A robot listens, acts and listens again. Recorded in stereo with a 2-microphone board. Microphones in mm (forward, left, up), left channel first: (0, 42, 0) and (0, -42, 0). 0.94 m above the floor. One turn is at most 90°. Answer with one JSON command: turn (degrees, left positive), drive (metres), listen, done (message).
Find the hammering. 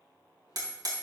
{"turn": -55}
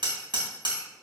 {"turn": -70}
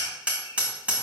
{"turn": -15}
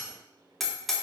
{"done": "Found it: hammering, straight ahead, 2 to 4 m away."}